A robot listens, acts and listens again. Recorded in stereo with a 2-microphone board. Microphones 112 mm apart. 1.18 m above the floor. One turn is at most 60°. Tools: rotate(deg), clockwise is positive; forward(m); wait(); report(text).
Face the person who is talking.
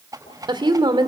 rotate(45)
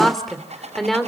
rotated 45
report("Facing the woman speaking, 2 to 4 m away.")